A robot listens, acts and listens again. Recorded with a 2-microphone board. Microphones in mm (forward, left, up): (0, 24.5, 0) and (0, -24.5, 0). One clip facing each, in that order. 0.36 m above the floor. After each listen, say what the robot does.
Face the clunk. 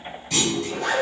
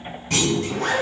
Turn 50° right.
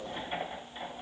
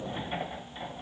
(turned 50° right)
Keep listening.
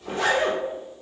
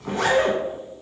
I heard a clunk, but can't make it out now. It was about straight ahead or 80° right.